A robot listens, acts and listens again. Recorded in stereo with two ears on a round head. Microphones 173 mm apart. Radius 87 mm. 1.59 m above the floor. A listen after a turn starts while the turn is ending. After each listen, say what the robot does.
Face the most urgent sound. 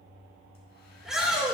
Turn 30° left.
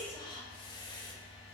Keep listening.
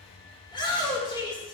Turn 155° left.
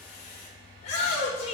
Turn 35° left.
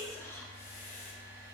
Keep listening.
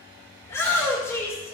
Turn 15° left.
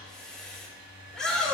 Found it: a shout, straight ahead.